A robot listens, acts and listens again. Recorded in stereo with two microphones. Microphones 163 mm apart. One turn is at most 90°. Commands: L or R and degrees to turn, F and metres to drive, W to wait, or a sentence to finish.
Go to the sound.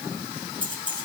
R30
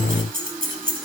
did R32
R90
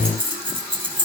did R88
R30
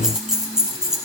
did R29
F1.0
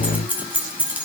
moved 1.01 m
R10
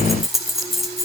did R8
F1.0
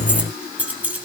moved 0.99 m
R10
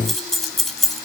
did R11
F1.0
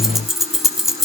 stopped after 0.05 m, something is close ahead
Arrived at the keys jangling, straight ahead.